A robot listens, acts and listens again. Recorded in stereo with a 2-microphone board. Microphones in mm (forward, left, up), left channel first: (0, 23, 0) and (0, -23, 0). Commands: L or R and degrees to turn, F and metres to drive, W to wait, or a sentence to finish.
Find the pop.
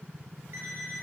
W
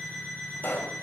L45
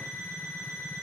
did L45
W
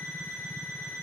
I heard a pop, but can't make it out now. It was about straight ahead or 90° left.